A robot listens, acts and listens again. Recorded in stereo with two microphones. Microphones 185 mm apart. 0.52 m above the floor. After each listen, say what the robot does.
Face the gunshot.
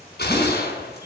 Turn 65° left.
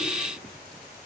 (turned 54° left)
Keep listening.
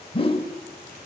I heard a gunshot, but can't make it out now. It was about 15° left or 60° left.